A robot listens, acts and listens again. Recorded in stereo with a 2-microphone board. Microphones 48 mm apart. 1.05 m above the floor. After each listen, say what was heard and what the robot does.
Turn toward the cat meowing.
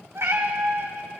The cat meowing: about 65° right or 115° right. Turn 65° right.
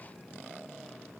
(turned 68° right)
Keep listening.
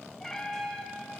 So it is at 15° left. Turn 15° left.
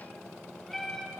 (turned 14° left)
Facing the cat meowing.